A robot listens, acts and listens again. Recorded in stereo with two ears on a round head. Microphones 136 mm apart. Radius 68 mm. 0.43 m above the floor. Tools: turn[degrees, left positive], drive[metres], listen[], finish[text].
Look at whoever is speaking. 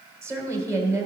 Thought: The woman speaking: about 20° right or 160° right.
Action: turn[-20]
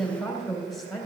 Action: finish[Found it: a woman speaking, straight ahead.]